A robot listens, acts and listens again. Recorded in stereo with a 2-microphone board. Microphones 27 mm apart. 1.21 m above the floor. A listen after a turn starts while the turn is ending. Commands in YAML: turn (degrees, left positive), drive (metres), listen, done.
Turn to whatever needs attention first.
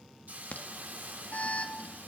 turn: 90
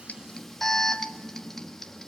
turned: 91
turn: 10
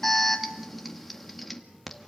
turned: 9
done: "Found it: an alarm, straight ahead, 1 to 2 m away."